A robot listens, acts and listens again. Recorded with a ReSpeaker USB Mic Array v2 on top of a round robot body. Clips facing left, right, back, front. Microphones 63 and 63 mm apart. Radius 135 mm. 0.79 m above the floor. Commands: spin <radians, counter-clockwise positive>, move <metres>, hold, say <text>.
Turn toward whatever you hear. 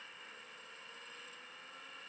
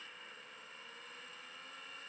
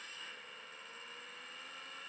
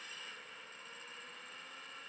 hold
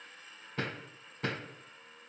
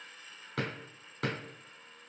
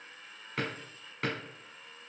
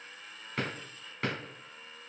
spin -1.57
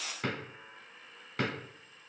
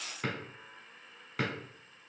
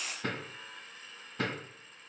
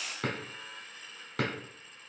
say Found it: a drawer, straight ahead.